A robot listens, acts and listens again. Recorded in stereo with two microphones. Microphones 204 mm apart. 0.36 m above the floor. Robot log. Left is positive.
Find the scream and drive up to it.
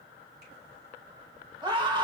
note: The scream: about 25° right or 155° right.
cmd yaw -25
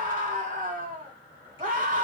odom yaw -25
note: So it is at 130° right.
cmd yaw -130
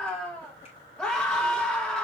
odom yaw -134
cmd fwd 1.0
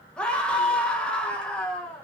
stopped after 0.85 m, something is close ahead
note: The scream is now 10° left.
cmd yaw +10
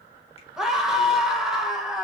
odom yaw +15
end: Arrived at the scream, straight ahead.